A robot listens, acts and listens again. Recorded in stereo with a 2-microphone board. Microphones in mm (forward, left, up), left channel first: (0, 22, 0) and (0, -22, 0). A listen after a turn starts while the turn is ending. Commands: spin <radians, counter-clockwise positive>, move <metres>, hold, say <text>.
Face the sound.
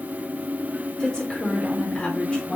spin 0.44
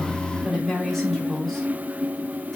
spin 0.52
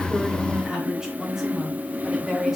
spin -0.17
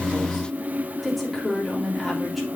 say Found it: a woman speaking, straight ahead, 2 to 4 m away.